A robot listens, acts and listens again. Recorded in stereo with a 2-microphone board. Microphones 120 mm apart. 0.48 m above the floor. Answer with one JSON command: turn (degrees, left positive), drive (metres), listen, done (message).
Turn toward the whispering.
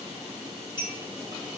{"listen": true}
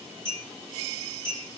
{"listen": true}
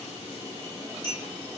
{"done": "I can't make out whispering to turn to."}